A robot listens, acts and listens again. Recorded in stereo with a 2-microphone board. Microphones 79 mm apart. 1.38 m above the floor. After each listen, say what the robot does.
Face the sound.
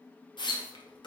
Turn 90° left.
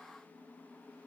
I heard a splash from this way, but can't make it out now.